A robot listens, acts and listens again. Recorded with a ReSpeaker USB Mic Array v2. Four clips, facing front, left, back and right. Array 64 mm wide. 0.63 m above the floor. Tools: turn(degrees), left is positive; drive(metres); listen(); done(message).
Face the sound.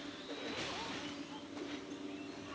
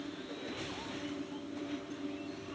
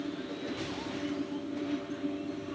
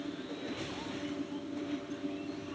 listen()
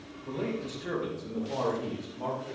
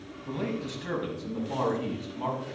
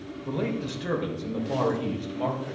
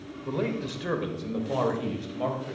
turn(degrees=-130)
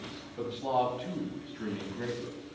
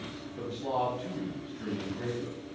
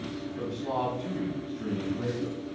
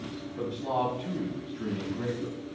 turn(degrees=10)
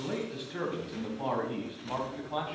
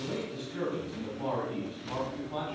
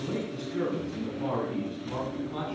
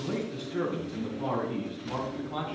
done("Facing the man speaking, over 4 m away.")